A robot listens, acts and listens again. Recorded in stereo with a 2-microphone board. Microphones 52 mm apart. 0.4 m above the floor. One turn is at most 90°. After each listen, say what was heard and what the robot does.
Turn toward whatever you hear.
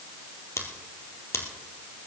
The scissors: about 75° left or 105° left. Turn 75° left.
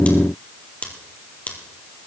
So it is at 30° left. Turn 30° left.
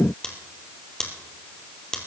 The scissors is now 15° left. Turn 15° left.
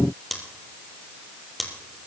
Facing the scissors, 2 to 4 m away.